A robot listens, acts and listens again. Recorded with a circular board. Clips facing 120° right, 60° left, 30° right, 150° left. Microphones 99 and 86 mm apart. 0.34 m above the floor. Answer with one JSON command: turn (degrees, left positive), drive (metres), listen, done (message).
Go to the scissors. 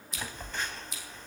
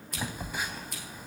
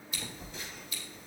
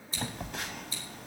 {"turn": 95}
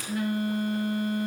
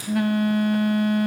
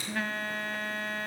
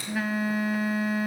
{"listen": true}
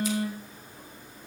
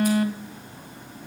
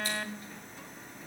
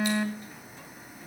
{"listen": true}
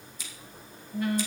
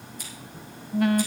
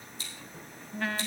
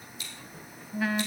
{"turn": 25}
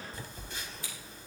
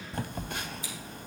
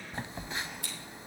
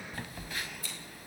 {"listen": true}
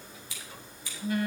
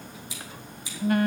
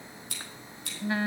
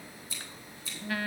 {"turn": -10}
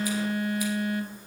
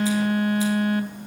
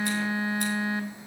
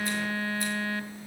{"listen": true}
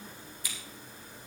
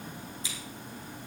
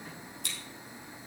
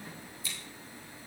{"drive": 1.0}
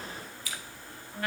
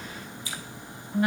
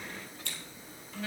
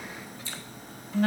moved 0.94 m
{"drive": 1.0}
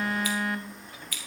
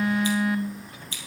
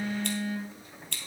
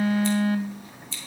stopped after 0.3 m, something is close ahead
{"done": "Something is in my way. I am facing the scissors but have not reached it."}